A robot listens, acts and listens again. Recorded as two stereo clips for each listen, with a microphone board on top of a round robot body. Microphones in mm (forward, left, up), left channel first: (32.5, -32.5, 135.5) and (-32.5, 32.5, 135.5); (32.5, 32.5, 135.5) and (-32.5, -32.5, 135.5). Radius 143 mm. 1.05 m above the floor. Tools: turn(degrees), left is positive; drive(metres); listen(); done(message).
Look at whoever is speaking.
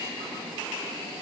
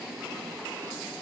listen()
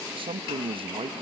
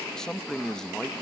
turn(degrees=130)
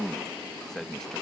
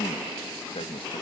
turn(degrees=40)
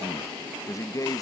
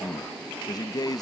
done("Facing the man speaking.")